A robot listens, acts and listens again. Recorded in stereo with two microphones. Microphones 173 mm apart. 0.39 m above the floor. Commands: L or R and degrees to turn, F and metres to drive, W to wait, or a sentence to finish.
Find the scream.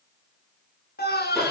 L65
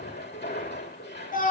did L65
L50
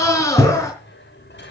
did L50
L15
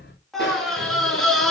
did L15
Facing the scream, over 4 m away.